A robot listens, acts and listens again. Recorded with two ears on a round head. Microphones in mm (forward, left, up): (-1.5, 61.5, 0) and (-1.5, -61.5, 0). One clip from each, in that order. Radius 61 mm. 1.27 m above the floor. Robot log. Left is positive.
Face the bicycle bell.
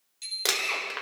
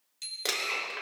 note: The bicycle bell: about 15° right or 165° right.
cmd yaw -15
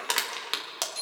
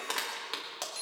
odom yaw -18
end: Found it: a bicycle bell, straight ahead, 2 to 4 m away.